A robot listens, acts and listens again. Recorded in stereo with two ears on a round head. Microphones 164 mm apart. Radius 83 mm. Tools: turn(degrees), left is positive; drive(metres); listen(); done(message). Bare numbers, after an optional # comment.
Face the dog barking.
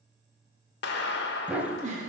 turn(-30)
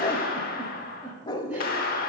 # So it is at 20° left.
turn(20)
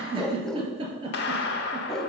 done("Facing the dog barking.")